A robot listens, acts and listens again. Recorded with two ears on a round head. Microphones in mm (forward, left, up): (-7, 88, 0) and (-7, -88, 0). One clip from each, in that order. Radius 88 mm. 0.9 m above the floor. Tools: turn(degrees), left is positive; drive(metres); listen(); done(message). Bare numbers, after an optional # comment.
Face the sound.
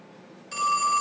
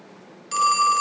# The phone ringing: about 45° right or 135° right.
turn(-45)
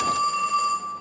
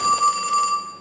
# So it is at 90° right.
turn(-90)
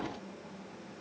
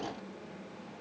listen()
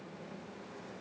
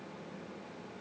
listen()
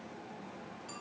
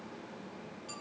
done("I heard a phone ringing from this way, but can't make it out now.")